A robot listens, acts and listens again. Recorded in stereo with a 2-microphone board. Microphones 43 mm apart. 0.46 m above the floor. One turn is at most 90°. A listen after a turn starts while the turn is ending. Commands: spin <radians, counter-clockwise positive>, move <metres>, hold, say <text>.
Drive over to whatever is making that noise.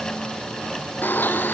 spin 0.96
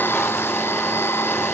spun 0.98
spin 1.22
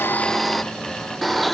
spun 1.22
move 1.0
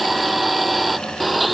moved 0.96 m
move 1.0
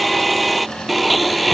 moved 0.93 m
move 1.0
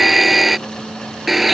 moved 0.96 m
move 1.0
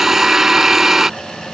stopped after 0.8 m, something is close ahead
spin -0.17
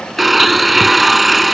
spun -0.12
say I am next to the blender.